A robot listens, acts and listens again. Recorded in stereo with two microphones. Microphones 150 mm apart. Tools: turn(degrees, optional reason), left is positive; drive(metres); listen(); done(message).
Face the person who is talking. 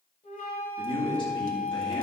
turn(degrees=35, reason="The man speaking: about 35° left or 145° left.")
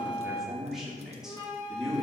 done("Facing the man speaking, 2 to 4 m away.")